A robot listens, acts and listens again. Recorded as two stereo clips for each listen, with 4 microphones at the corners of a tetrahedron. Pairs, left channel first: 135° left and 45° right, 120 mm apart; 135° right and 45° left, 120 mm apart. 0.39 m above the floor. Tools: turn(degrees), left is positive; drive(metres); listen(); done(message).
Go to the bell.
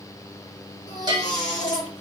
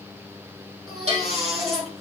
turn(degrees=10)
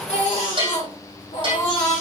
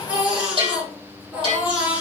drive(metres=1.0)
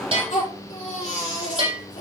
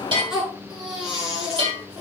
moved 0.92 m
drive(metres=1.0)
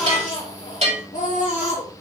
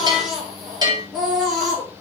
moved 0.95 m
turn(degrees=-10)
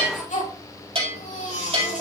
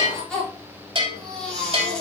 drive(metres=1.0)
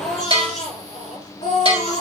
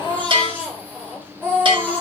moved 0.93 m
drive(metres=1.0)
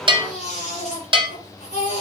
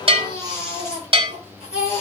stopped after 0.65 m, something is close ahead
done("I am next to the bell.")